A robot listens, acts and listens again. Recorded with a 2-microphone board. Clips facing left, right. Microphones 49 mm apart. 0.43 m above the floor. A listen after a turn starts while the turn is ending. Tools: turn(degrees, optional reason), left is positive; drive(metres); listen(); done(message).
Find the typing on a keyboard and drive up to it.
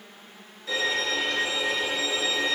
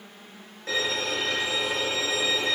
listen()
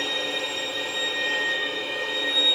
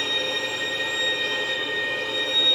listen()
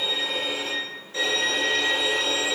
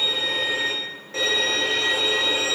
done("I can't make out typing on a keyboard to turn to.")